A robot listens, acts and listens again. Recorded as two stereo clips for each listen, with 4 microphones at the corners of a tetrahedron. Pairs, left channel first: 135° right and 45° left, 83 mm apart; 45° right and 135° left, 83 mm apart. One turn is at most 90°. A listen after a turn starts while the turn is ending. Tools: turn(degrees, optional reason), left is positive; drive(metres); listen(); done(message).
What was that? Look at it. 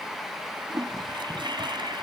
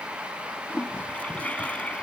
turn(degrees=30, reason="The toilet flushing: 30° left.")
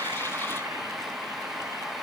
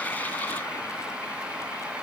listen()
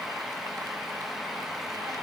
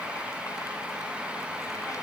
listen()
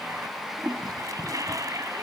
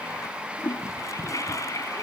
done("Facing the toilet flushing.")